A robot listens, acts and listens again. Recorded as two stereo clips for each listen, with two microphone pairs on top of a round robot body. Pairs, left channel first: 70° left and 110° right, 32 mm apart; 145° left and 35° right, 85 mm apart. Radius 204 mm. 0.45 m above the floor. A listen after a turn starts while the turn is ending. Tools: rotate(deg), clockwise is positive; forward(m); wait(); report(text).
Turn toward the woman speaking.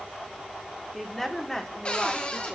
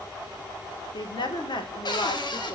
rotate(-145)
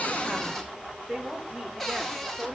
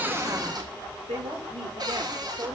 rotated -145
rotate(35)
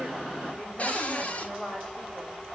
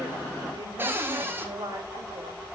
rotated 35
report("Facing the woman speaking.")